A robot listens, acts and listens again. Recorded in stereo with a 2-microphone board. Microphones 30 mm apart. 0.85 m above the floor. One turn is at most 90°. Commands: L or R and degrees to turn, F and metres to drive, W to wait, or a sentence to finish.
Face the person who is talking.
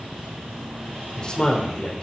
L30
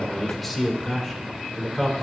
Found it: a man speaking, straight ahead.